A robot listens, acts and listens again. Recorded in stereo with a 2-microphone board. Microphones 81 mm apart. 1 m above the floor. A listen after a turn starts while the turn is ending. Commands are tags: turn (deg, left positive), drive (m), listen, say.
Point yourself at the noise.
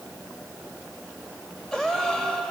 <turn deg="30"/>
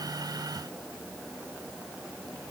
<listen/>
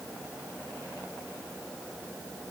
<say>I heard a gasp, but can't make it out now. It was about 25° right or 145° left.</say>